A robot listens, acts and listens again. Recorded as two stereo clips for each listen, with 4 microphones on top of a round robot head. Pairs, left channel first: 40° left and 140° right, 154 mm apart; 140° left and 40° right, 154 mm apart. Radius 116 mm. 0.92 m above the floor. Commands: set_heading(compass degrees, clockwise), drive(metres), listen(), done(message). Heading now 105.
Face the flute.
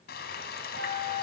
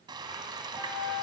set_heading(240)
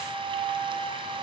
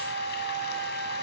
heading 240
done("Found it: a flute, straight ahead, over 4 m away.")